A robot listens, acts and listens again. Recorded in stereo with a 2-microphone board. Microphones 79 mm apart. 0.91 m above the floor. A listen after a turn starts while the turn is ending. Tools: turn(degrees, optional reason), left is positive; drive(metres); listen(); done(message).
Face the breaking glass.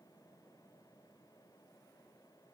listen()
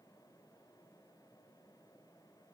listen()
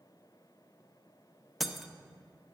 turn(degrees=30)
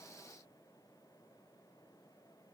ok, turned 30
listen()
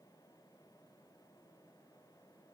done("I heard breaking glass, but can't make it out now. It was about 30° right or 150° left.")